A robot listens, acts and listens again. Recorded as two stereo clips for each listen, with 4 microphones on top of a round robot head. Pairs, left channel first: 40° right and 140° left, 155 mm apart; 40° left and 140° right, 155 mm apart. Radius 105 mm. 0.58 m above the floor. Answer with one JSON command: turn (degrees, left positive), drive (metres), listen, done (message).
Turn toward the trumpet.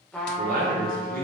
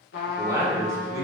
{"turn": 45}
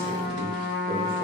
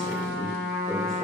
{"turn": 20}
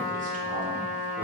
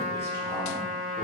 {"done": "Facing the trumpet, under 1 m away."}